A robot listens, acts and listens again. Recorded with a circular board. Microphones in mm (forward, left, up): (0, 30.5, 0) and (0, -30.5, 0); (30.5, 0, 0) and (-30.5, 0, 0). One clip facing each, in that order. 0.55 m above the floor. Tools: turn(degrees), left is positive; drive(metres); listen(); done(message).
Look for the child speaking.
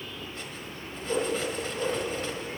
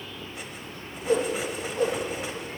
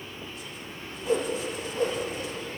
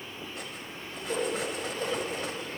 listen()
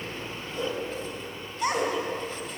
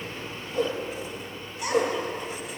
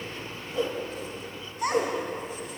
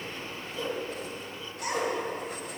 turn(degrees=35)
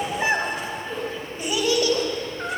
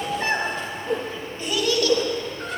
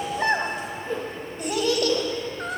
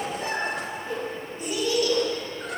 turn(degrees=25)
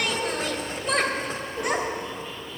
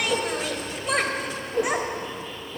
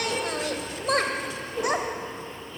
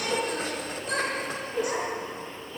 done("Found it: a child speaking, straight ahead.")